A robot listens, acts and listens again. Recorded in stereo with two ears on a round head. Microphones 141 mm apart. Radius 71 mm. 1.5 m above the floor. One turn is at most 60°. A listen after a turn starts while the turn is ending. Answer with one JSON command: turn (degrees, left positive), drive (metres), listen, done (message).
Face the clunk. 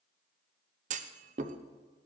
{"turn": -50}
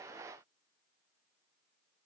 {"listen": true}
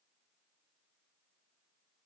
{"done": "I heard a clunk, but can't make it out now. It was about straight ahead or 80° right."}